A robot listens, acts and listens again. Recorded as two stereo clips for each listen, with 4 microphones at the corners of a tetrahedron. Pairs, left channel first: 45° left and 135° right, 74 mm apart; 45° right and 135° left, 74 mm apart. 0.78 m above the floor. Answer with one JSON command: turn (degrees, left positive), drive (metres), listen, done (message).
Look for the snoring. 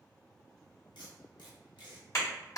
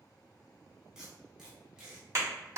{"listen": true}
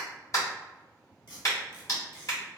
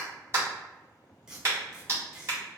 {"listen": true}
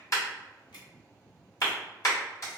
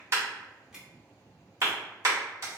{"done": "I can't make out snoring, only tape being pulled and a clap."}